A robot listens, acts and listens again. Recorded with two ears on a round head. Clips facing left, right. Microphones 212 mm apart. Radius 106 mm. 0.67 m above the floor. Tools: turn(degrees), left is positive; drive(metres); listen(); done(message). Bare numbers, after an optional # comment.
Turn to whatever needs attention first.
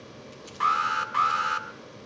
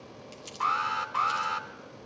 # The alarm: about 30° left or 150° left.
turn(30)
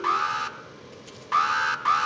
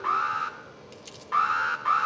# So it is at 120° left.
turn(120)
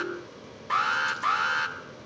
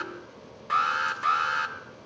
# The alarm is now 10° right.
turn(-10)
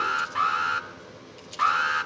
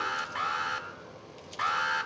done("Facing the alarm.")